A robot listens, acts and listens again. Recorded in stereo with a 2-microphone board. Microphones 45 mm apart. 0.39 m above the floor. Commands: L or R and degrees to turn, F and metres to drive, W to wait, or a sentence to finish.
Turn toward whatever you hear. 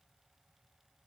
W
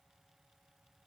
W
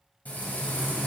L35
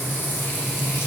L105
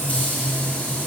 L40
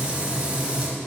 R30
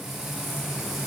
R10
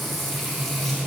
Facing the frying, 1 to 2 m away.